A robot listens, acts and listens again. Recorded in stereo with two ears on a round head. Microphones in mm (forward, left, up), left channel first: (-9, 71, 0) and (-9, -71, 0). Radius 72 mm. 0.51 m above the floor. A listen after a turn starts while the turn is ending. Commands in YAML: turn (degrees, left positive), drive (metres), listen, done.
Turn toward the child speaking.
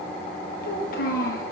turn: 65
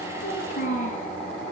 turn: 50
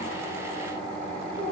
listen: true
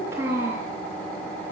turn: -15
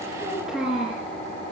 done: "Found it: a child speaking, straight ahead."